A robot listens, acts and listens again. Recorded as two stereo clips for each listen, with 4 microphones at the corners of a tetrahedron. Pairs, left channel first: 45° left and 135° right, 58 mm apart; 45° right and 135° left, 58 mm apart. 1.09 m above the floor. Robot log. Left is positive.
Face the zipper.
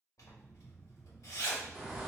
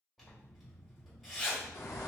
note: The zipper: 50° left.
cmd yaw +50
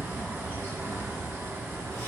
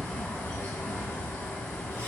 cmd idle
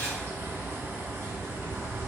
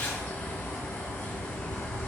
cmd idle
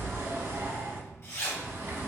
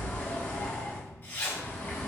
note: The zipper is now 10° left.
cmd yaw +10
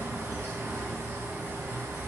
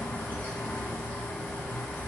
cmd idle
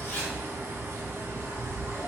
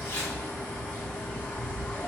cmd idle
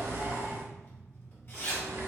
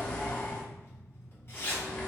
end: Facing the zipper, 1 to 2 m away.